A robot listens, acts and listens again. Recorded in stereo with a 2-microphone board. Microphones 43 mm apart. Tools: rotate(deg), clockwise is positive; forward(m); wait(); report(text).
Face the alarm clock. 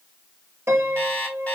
rotate(-35)
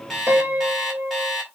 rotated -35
report("Facing the alarm clock.")